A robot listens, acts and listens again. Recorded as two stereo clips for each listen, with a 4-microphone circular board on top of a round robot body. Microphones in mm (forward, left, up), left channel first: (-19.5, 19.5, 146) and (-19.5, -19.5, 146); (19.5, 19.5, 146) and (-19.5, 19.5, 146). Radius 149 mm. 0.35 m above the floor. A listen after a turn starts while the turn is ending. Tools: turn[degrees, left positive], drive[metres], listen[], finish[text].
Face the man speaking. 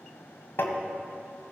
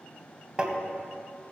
Action: listen[]
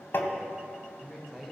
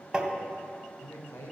Action: finish[Facing the man speaking.]